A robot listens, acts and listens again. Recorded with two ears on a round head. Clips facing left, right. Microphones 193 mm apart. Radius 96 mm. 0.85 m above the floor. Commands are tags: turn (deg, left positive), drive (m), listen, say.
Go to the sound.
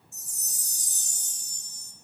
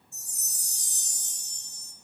<turn deg="40"/>
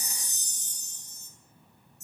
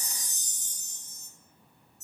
<turn deg="95"/>
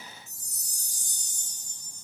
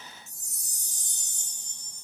<turn deg="-20"/>
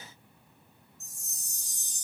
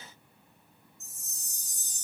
<drive m="1.0"/>
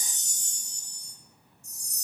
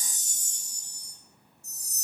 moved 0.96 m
<turn deg="-10"/>
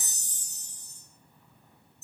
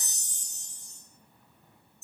<drive m="1.0"/>
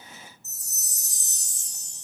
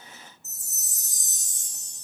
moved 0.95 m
<drive m="1.0"/>
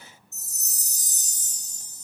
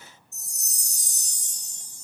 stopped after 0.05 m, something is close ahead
<say>I am next to the chime.</say>